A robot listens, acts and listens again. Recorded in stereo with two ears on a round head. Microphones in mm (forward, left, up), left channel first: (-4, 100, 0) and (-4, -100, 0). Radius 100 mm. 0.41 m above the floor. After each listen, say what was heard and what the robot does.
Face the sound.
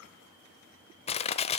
The crushing: about 25° left or 155° left. Turn 25° left.
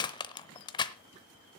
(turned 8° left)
The crushing: about 20° left or 160° left. Turn 20° left.
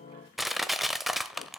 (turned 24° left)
Facing the crushing.